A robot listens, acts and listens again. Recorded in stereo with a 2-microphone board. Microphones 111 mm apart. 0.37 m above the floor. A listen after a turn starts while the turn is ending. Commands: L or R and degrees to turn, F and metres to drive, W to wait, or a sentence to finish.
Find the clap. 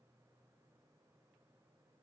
W
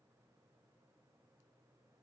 W
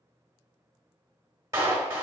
R30
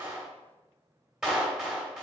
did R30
Found it: a clap, straight ahead, 1 to 2 m away.